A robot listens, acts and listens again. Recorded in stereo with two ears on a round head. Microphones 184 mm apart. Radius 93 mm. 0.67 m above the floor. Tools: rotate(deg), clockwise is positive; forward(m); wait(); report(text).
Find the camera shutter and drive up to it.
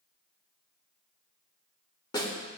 wait()
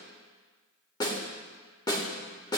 wait()
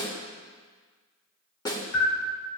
rotate(-35)
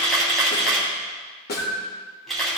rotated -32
forward(1.0)
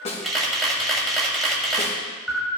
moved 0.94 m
forward(1.0)
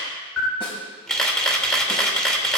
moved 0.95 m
forward(1.0)
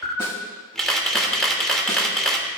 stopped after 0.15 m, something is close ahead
report("I am next to the camera shutter.")